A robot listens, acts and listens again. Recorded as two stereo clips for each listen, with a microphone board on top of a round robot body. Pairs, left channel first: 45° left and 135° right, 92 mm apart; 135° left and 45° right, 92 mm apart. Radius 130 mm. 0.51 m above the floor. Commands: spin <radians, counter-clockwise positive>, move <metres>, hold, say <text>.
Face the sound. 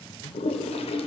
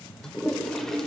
spin 0.87
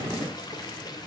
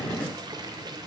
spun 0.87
say Found it: a toilet flushing, straight ahead, under 1 m away.